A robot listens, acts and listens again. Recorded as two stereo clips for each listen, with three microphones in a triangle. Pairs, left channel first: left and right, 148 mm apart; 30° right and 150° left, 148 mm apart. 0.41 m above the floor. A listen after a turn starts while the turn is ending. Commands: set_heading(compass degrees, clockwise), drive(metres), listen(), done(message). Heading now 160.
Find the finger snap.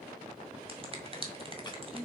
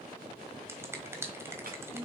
set_heading(300)
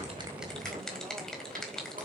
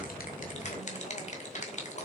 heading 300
done("Found it: a finger snap, straight ahead, 1 to 2 m away.")